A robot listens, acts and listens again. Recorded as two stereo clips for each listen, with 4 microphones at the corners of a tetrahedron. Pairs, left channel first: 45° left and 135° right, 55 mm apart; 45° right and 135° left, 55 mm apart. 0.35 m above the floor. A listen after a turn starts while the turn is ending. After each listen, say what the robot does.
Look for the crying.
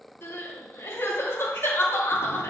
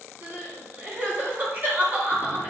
Turn 80° left.
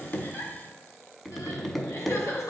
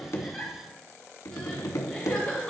Turn 30° left.
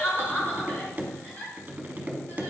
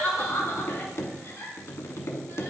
Facing the crying.